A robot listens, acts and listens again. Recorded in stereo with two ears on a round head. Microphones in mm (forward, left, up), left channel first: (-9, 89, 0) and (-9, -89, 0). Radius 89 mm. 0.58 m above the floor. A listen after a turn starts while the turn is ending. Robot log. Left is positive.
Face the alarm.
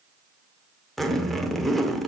cmd idle
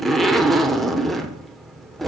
cmd idle
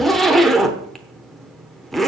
end: I can't make out an alarm, only a zipper.